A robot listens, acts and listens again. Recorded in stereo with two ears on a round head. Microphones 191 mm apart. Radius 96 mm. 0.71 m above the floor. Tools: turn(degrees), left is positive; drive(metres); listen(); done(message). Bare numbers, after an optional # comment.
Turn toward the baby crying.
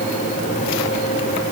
listen()
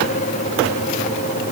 listen()
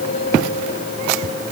done("I can't make out a baby crying to turn to.")